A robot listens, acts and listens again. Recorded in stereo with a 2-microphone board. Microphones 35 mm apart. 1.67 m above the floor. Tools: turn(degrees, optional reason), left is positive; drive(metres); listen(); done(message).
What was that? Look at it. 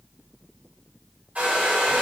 turn(degrees=-50, reason="The hair dryer: about 50° right or 130° right.")
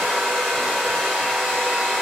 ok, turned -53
done("Found it: a hair dryer, straight ahead, 1 to 2 m away.")